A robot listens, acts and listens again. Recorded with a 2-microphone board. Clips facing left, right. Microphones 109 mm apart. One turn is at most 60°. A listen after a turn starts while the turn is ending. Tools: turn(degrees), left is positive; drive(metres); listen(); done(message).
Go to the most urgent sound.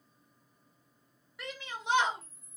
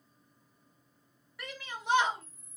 turn(degrees=20)
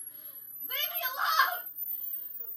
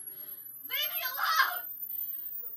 turn(degrees=60)
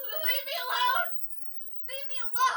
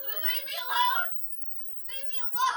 turn(degrees=60)
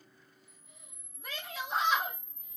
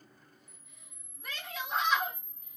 drive(metres=1.0)
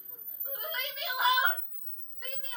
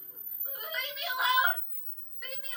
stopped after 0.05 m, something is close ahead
done("Something is in my way. I am facing the shout but have not reached it.")